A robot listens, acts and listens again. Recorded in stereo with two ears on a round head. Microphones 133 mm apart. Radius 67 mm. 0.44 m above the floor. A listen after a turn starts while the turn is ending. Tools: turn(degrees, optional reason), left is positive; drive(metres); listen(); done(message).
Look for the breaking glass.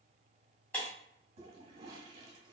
turn(degrees=30)
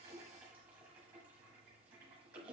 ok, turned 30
listen()
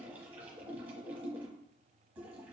done("I heard breaking glass, but can't make it out now. It was about 20° right or 140° left.")